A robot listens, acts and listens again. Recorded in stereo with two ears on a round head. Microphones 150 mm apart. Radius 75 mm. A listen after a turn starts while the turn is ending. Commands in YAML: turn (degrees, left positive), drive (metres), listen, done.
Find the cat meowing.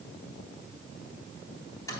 listen: true
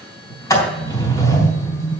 listen: true
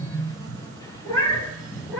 turn: 30
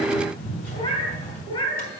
turn: 155
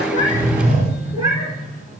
turn: -20
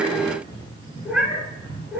done: "Facing the cat meowing."